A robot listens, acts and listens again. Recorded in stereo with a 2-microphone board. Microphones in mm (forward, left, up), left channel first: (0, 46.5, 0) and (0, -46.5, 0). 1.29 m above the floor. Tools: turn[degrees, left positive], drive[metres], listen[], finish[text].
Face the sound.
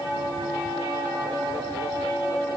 Action: listen[]
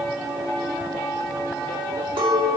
Action: turn[-90]
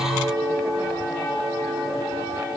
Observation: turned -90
Action: finish[Found it: a clink, straight ahead.]